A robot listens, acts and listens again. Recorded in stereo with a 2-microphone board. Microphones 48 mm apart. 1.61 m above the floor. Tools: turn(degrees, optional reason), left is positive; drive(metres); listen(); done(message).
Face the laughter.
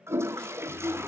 turn(degrees=55, reason="The laughter: about 55° left or 125° left.")
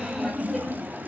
done("Facing the laughter.")